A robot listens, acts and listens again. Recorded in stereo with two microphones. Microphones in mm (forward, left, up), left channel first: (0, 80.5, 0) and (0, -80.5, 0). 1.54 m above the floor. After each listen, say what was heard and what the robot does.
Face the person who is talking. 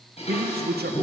Turn 90° right.
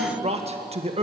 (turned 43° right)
So it is at 40° right. Turn 40° right.
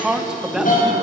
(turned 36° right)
Facing the man speaking.